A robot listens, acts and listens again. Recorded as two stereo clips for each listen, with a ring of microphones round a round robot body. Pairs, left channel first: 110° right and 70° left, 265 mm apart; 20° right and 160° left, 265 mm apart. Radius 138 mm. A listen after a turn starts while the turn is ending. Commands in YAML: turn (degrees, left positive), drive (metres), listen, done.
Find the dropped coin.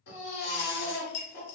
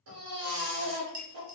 turn: -115
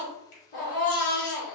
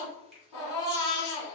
done: "I heard a dropped coin from this way, but can't make it out now."